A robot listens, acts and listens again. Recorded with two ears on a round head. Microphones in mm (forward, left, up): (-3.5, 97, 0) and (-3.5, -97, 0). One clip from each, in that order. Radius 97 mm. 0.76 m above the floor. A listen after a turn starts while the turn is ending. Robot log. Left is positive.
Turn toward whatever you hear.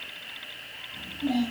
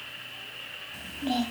cmd yaw -90
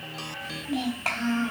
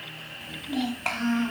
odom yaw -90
end: Found it: a child speaking, straight ahead.